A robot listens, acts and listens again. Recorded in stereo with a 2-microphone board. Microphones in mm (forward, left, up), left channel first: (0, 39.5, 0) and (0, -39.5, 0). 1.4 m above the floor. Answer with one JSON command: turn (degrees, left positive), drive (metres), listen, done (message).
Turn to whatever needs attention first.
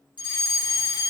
{"turn": 90}
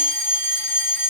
{"turn": -10}
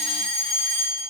{"done": "Found it: a fire alarm, straight ahead, over 4 m away."}